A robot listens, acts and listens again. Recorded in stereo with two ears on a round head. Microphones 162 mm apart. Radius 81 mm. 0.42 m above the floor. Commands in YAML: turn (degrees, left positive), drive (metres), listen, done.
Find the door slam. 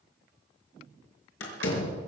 turn: 90
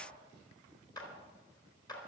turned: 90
done: "I heard a door slam from this way, but can't make it out now."